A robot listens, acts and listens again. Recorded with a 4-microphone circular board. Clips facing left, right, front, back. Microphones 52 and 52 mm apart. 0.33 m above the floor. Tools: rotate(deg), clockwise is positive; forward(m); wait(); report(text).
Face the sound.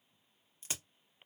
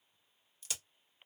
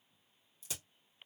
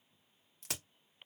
rotate(-150)
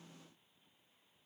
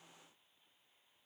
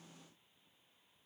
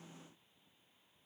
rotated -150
report("I heard a crack from this way, but can't make it out now.")